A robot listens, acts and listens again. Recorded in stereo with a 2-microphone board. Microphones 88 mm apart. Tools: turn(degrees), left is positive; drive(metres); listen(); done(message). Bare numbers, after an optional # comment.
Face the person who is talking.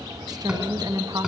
# The woman speaking: about 45° right or 135° right.
turn(-45)
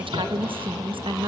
# So it is at 85° right.
turn(-85)
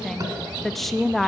done("Found it: a woman speaking, straight ahead, 1 to 2 m away.")